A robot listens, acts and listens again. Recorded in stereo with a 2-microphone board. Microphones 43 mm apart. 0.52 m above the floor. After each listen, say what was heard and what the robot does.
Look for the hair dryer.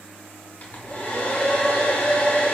The hair dryer: about 40° left or 140° left. Turn 40° left.
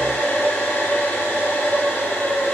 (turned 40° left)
So it is at 100° left. Turn 100° left.
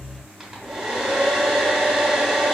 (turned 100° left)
The hair dryer is now 10° right. Turn 10° right.
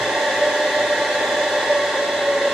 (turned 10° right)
Facing the hair dryer, 1 to 2 m away.